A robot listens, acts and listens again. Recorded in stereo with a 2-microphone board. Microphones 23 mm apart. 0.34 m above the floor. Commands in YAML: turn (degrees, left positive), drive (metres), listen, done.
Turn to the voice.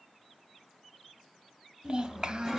turn: -40
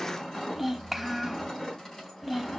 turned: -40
done: "Facing the child speaking, 1 to 2 m away."